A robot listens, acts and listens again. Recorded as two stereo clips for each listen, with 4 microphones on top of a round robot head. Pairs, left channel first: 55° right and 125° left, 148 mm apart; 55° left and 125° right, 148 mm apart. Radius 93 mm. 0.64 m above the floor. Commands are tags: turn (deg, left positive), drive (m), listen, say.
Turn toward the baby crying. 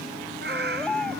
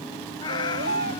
<turn deg="-140"/>
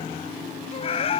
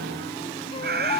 <listen/>
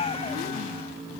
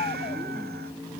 <listen/>
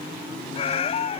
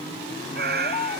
<say>Found it: a baby crying, straight ahead.</say>